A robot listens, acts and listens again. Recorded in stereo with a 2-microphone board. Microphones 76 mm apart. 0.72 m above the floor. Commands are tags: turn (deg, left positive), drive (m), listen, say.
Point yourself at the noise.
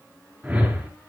<turn deg="-30"/>
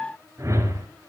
<turn deg="-140"/>
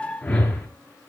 <turn deg="15"/>
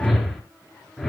<say>Facing the whoosh, 2 to 4 m away.</say>